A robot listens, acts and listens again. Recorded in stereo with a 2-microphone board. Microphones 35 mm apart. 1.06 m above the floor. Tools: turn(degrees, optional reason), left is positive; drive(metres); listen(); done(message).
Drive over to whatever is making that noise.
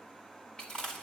turn(degrees=25, reason="The chewing: about 25° left or 155° left.")
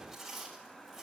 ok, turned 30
drive(metres=1.0)
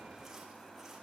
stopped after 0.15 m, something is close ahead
listen()
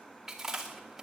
turn(degrees=-10, reason="The chewing is now 10° right.")
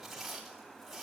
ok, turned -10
done("Blocked. The chewing is further on, straight ahead.")